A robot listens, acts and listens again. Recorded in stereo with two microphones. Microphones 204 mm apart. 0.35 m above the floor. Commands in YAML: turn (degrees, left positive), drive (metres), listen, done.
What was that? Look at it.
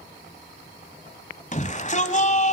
turn: 35
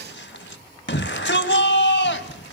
turn: 105
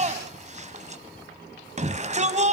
turn: -40
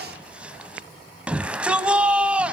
done: "Facing the shout."